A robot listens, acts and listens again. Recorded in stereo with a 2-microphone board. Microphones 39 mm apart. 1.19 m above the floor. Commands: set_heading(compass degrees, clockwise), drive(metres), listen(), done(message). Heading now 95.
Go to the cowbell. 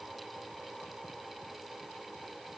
listen()
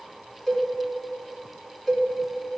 set_heading(65)
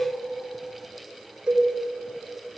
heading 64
set_heading(84)
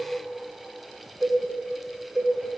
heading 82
drive(1.0)
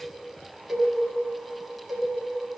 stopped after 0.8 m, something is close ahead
done("I am next to the cowbell.")